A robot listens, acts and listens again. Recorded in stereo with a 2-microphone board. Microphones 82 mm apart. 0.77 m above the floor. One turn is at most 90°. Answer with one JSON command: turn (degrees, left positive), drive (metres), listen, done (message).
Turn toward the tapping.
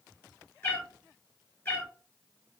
{"listen": true}
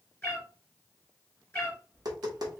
{"turn": -55}
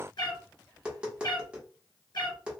{"turn": -15}
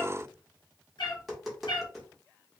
{"done": "Facing the tapping, 1 to 2 m away."}